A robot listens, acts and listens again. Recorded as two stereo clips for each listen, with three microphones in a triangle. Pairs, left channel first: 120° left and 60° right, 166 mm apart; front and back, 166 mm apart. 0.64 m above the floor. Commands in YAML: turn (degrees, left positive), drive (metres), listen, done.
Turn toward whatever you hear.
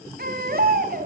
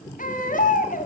turn: -35
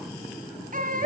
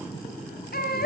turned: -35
turn: -25
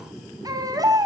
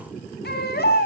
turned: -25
turn: 10
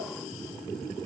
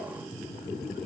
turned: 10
listen: true
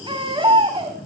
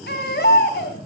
done: "Found it: a baby crying, straight ahead, 2 to 4 m away."